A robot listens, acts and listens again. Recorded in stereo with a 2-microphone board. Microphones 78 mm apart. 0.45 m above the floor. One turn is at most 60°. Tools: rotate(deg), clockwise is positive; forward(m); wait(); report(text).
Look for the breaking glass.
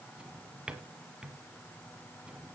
wait()
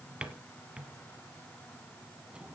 wait()
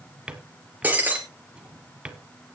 rotate(20)
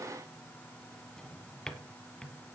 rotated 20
wait()
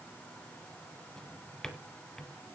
report("I heard breaking glass, but can't make it out now. It was about straight ahead or 140° right.")